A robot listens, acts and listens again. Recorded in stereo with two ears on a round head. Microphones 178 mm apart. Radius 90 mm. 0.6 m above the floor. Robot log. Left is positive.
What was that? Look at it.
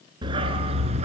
note: The dog barking: about 35° right or 145° right.
cmd yaw -35
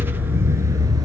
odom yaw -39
note: So it is at 20° right.
cmd yaw -20
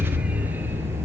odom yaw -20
note: The dog barking is now 15° right.
cmd yaw -15
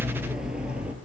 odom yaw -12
end: Found it: a dog barking, straight ahead, 2 to 4 m away.